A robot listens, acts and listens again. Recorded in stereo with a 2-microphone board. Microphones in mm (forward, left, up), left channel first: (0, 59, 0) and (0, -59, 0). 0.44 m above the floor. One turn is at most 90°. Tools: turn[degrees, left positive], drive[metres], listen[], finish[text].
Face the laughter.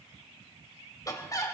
Thought: The laughter: about 30° left or 150° left.
Action: turn[30]
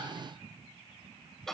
Action: finish[Facing the laughter.]